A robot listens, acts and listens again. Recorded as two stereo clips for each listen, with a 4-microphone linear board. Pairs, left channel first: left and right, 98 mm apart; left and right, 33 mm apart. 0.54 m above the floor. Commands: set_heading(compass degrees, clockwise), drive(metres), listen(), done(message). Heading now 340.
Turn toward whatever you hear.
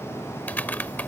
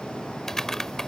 set_heading(320)
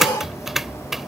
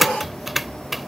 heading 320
done("Found it: typing on a keyboard, straight ahead.")